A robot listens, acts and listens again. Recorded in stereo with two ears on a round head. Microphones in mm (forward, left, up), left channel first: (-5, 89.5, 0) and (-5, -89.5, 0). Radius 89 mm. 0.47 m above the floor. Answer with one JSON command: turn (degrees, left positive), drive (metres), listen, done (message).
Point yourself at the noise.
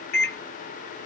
{"turn": 55}
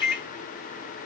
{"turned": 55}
{"turn": 55}
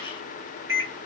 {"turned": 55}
{"turn": -15}
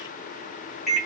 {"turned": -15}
{"done": "Found it: a microwave, straight ahead."}